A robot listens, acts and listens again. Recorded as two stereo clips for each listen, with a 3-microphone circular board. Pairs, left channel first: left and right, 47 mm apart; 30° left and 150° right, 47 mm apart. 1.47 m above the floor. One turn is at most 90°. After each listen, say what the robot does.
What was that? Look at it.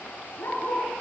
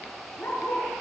Turn 65° left.
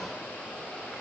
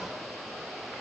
Keep listening.
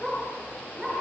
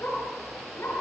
Facing the dog barking, over 4 m away.